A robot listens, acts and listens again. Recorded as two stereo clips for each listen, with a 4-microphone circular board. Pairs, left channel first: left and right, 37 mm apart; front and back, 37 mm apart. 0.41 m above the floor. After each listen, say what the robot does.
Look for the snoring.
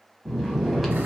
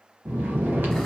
Turn 180° left.
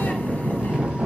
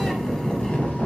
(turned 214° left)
Turn 35° right.
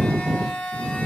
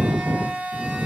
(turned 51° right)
Turn 15° left.
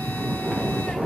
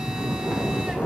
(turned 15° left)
Found it: snoring, straight ahead, under 1 m away.